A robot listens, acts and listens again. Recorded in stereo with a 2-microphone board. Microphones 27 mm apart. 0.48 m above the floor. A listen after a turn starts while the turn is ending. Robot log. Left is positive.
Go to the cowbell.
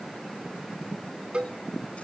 note: The cowbell: about 45° right or 135° right.
cmd yaw -45
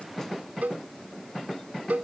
note: So it is at 90° right.
cmd yaw -90
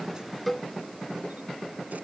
note: The cowbell is now 10° left.
cmd yaw +10
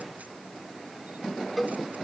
cmd fwd 1.0
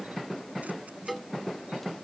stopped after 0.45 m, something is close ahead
end: Something is in my way. I am facing the cowbell but have not reached it.